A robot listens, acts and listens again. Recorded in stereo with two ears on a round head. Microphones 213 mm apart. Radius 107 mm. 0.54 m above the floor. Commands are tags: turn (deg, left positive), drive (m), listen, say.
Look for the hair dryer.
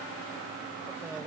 <listen/>
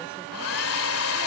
<turn deg="60"/>
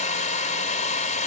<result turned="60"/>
<turn deg="35"/>
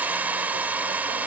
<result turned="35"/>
<turn deg="-10"/>
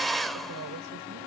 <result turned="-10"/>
<say>Facing the hair dryer.</say>